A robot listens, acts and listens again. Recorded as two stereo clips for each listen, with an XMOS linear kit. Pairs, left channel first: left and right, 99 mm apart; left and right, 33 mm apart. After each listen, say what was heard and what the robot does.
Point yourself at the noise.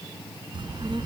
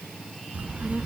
The child speaking: about 55° right or 125° right. Turn 55° right.
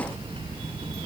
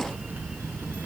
So it is at 70° right. Turn 70° right.
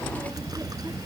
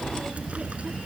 The child speaking is now 40° right. Turn 40° right.
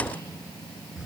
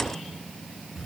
Found it: a child speaking, straight ahead.